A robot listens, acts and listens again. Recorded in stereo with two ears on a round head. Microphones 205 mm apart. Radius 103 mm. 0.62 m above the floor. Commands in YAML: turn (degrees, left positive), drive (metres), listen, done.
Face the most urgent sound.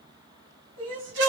turn: -60
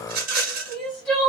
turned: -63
done: "Facing the crying."